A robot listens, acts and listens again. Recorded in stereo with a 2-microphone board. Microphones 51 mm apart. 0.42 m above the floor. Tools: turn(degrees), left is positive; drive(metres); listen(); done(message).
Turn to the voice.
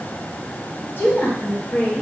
turn(degrees=50)
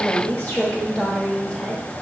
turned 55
turn(degrees=15)
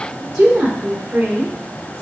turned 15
turn(degrees=-25)
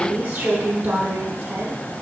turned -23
turn(degrees=-25)
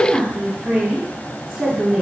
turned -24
done("Found it: a woman speaking, straight ahead.")